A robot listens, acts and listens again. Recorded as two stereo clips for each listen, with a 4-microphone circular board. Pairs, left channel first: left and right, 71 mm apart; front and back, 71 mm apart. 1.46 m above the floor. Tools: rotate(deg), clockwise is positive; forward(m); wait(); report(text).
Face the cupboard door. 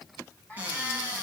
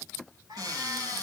rotate(155)
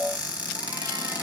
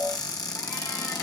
rotate(15)
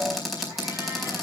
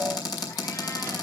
report("Facing the cupboard door.")